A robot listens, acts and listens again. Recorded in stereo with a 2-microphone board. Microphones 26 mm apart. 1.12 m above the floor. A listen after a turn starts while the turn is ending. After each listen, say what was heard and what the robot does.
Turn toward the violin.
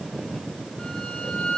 The violin: about 30° left or 150° left. Turn 30° left.
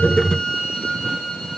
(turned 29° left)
Facing the violin, 2 to 4 m away.